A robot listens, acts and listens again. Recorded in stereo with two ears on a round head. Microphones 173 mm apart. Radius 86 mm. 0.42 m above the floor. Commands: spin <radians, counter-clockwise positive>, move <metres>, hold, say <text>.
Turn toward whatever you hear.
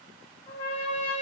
spin 0.35
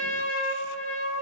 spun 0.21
spin 0.17
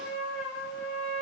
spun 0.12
say Found it: a trumpet, straight ahead.